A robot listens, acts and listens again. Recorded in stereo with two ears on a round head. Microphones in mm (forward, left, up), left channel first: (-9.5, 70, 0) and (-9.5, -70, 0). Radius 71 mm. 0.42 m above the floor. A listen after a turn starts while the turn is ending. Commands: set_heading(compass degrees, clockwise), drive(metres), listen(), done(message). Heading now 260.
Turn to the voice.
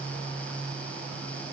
listen()
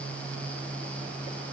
listen()
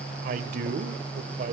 set_heading(320)
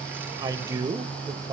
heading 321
set_heading(351)
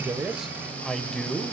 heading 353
done("Facing the man speaking, 1 to 2 m away.")